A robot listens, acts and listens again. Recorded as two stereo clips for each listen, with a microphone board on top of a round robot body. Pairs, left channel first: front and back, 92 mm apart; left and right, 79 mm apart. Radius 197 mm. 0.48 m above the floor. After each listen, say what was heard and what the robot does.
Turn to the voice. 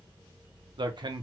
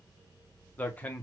The man speaking: 160° left. Turn 160° left.
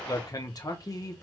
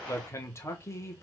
The man speaking is now 40° left. Turn 40° left.
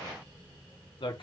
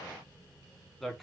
Found it: a man speaking, straight ahead, 1 to 2 m away.